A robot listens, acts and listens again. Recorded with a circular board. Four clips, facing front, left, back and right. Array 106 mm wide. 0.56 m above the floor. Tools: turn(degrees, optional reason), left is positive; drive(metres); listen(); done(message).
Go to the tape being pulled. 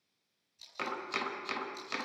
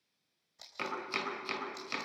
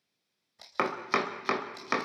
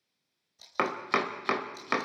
turn(degrees=160, reason="The tape being pulled: 160° left.")
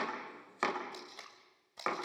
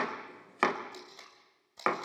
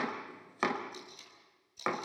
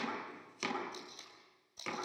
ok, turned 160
turn(degrees=25, reason="The tape being pulled is now 25° left.")
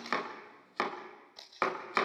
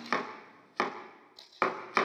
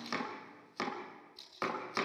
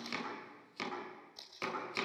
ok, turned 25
drive(metres=1.0)
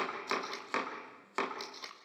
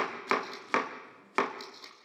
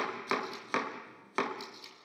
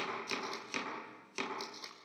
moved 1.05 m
drive(metres=1.0)
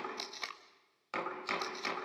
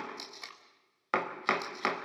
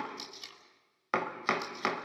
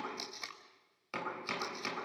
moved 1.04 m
turn(degrees=-10, reason="The tape being pulled is now 10° right.")
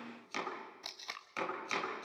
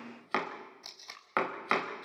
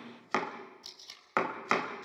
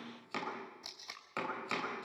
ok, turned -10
drive(metres=1.0)
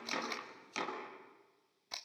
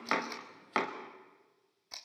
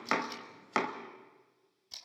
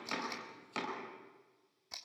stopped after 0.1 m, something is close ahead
done("I am next to the tape being pulled.")